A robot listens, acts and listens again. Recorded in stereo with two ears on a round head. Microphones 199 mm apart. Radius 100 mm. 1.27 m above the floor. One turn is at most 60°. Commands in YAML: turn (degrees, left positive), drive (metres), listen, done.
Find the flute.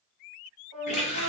turn: -55
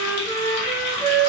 done: "Facing the flute, 1 to 2 m away."